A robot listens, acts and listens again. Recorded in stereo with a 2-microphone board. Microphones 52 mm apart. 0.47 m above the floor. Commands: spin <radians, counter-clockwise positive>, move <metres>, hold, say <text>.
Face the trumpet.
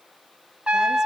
spin -0.35
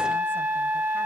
spin -2.36
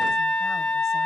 spin 0.26
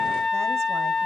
say Facing the trumpet, 1 to 2 m away.